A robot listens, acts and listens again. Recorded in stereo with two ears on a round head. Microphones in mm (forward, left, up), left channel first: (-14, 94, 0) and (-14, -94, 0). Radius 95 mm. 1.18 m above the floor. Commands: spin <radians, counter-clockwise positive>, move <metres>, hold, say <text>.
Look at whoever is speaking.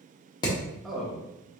spin 0.52
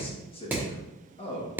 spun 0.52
spin 2.62
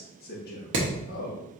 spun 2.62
spin 0.79
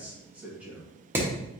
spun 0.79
spin -0.17
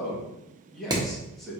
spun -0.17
say Facing the man speaking.